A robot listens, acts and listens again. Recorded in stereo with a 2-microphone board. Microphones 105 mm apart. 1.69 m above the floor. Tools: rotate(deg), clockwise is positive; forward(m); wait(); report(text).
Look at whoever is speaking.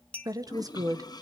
rotate(35)
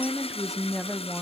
report("Facing the woman speaking.")